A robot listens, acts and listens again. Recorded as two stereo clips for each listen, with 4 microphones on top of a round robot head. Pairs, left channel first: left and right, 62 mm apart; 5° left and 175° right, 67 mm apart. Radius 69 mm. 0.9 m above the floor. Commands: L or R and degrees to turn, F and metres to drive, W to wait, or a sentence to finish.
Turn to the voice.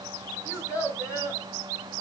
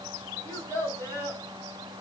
L60
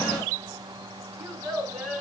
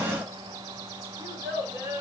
Facing the child speaking, over 4 m away.